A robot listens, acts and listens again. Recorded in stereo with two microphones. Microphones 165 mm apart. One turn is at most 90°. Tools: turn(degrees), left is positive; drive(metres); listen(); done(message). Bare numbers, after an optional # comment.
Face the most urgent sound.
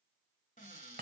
listen()
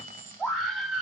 turn(30)
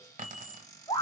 # So it is at 150° left.
turn(90)
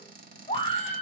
# The scream is now 55° left.
turn(55)
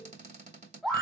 done("Found it: a scream, straight ahead, 1 to 2 m away.")